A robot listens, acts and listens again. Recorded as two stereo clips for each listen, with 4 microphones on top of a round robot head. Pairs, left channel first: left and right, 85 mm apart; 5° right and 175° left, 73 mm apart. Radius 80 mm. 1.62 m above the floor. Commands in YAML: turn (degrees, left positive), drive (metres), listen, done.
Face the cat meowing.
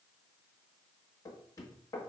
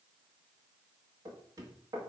listen: true
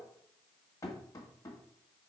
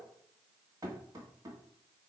listen: true
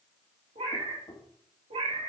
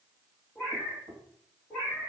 turn: -80
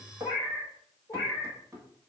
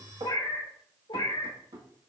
done: "Found it: a cat meowing, straight ahead."